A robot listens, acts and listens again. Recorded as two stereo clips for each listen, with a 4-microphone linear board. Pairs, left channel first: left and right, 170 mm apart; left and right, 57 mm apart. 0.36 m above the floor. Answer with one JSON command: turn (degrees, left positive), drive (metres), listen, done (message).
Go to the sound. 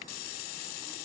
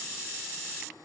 {"listen": true}
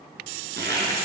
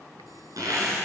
{"turn": -90}
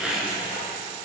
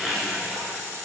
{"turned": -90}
{"drive": 1.0}
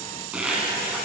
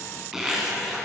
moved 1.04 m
{"turn": -10}
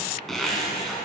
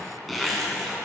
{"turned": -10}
{"drive": 1.0}
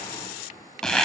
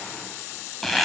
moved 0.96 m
{"drive": 1.0}
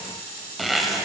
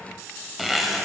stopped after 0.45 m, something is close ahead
{"done": "I am next to the zipper."}